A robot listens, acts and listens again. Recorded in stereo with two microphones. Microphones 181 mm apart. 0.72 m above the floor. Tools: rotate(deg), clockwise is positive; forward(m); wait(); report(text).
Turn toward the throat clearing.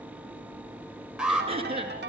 rotate(35)
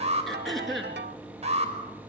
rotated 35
report("Found it: throat clearing, straight ahead, over 4 m away.")